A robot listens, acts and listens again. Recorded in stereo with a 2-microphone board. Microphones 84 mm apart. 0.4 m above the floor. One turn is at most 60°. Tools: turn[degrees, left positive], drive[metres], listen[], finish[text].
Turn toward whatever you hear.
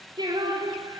Thought: The singing: about 60° right or 120° right.
Action: turn[-60]
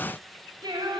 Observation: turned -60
Thought: So it is at 55° right.
Action: turn[-55]
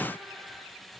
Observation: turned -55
Action: listen[]
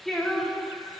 Thought: The singing is now 10° left.
Action: turn[10]
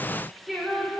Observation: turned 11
Action: finish[Facing the singing.]